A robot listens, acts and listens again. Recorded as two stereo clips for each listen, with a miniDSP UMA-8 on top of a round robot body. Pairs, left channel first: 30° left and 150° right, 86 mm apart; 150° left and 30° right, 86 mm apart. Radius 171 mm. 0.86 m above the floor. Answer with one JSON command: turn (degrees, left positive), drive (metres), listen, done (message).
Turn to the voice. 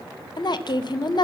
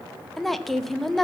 {"turn": 60}
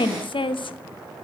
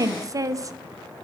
{"turn": 20}
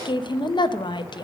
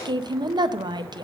{"done": "Found it: a woman speaking, straight ahead, under 1 m away."}